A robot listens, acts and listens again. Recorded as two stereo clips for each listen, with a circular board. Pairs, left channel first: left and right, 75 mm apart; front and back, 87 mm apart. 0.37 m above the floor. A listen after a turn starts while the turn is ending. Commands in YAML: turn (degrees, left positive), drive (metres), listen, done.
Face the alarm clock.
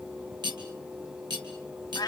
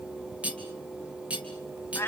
listen: true
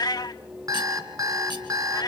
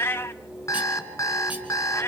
turn: -55
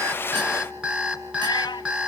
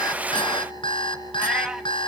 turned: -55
turn: -20
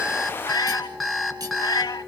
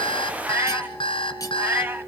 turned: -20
done: "Facing the alarm clock, 2 to 4 m away."